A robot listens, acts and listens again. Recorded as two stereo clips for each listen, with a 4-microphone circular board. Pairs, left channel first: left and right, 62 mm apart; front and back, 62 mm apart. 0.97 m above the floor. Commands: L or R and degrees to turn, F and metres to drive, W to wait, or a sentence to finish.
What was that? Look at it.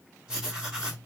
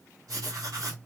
R165
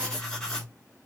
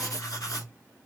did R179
L15
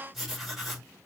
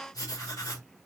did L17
Found it: writing, straight ahead, 1 to 2 m away.